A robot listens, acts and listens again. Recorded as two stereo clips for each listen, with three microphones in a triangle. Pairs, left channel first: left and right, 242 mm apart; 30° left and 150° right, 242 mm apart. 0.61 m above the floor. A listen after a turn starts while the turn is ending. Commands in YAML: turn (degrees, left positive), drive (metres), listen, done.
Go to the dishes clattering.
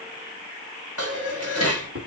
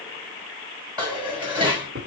turn: -75
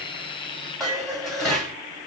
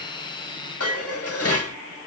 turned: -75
drive: 1.0
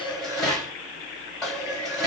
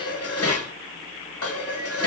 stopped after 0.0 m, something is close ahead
done: "Something is in my way. I am facing the dishes clattering but have not reached it."